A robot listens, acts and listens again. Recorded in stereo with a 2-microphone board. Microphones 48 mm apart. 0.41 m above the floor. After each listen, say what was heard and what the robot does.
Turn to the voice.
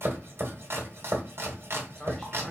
The man speaking: about 15° left or 165° left. Turn 15° left.
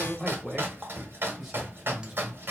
Turn 30° right.
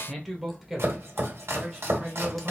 The man speaking: about 20° right or 160° right. Turn 20° right.
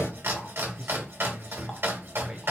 Turn 30° right.
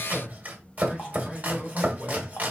So it is at 15° left. Turn 15° left.
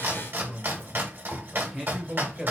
Facing the man speaking.